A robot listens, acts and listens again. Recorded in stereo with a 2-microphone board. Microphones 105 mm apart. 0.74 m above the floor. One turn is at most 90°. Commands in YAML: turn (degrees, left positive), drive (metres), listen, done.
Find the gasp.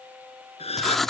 turn: 75
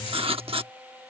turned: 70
listen: true
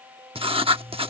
done: "I heard a gasp, but can't make it out now. It was about 5° left or 35° left."